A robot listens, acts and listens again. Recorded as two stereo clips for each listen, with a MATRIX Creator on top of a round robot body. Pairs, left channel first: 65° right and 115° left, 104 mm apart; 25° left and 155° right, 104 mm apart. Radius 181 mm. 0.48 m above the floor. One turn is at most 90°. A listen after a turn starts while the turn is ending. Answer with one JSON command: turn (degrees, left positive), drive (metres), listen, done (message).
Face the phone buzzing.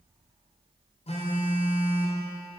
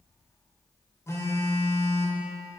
{"turn": -45}
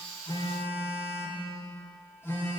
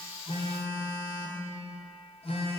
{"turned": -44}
{"done": "Found it: a phone buzzing, straight ahead, 1 to 2 m away."}